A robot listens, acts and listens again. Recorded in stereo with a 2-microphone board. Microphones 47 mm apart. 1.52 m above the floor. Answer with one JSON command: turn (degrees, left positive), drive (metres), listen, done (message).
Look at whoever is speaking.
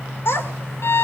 {"turn": 55}
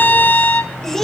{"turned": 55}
{"turn": 10}
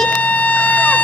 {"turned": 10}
{"listen": true}
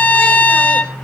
{"listen": true}
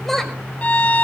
{"done": "Found it: a child speaking, straight ahead."}